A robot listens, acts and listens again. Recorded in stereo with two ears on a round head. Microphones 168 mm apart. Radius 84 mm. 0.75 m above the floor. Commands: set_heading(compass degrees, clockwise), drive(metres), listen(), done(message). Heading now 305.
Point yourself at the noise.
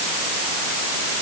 listen()
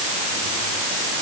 listen()
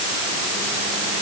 done("I can't make out anything.")